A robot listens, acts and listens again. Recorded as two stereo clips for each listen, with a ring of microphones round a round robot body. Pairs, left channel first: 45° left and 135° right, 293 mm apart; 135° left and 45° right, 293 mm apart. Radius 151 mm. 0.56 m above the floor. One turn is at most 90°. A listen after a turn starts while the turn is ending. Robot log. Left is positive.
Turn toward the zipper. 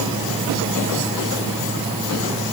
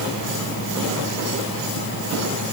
cmd idle
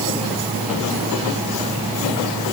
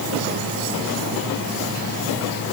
cmd idle
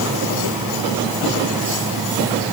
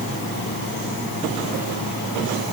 end: I can't make out a zipper.